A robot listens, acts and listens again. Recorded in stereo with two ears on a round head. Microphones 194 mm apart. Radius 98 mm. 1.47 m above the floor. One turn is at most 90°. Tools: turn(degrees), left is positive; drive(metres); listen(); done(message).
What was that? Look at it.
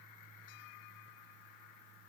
listen()
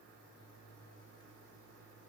listen()
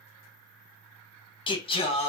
turn(degrees=30)
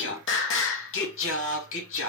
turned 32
turn(degrees=90)
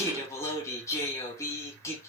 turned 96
turn(degrees=15)
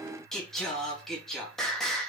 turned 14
done("Facing the singing, 2 to 4 m away.")